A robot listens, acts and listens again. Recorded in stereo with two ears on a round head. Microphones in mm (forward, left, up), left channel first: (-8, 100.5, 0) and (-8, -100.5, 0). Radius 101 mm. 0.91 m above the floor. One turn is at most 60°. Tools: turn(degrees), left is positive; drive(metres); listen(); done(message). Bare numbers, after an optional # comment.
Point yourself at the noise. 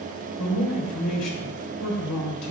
# The man speaking: about 75° left or 105° left.
turn(60)
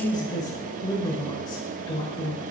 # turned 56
# So it is at 20° left.
turn(20)
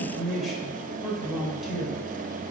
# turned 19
done("Found it: a man speaking, straight ahead, 2 to 4 m away.")